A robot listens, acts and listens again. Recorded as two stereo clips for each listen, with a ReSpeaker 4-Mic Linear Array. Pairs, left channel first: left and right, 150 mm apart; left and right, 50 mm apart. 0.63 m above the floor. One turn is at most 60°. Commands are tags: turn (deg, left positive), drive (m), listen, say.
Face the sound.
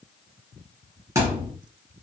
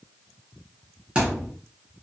<turn deg="-20"/>
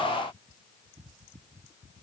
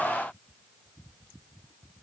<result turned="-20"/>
<listen/>
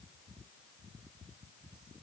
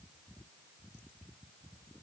<say>I heard a thud, but can't make it out now. It was about straight ahead or 140° right.</say>